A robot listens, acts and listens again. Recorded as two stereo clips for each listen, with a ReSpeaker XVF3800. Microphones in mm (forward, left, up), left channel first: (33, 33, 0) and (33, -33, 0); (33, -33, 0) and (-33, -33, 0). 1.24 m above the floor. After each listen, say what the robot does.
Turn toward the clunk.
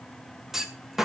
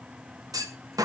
Turn 175° right.
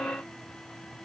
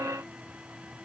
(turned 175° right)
I heard a clunk from this way, but can't make it out now.